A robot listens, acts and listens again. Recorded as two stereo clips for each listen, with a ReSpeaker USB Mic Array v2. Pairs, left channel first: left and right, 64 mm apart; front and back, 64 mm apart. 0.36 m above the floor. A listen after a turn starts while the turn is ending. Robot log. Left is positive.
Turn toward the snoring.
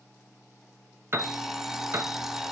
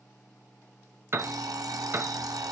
cmd idle
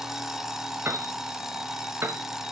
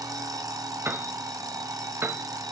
cmd idle
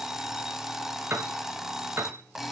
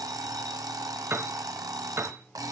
end: I can't make out snoring to turn to.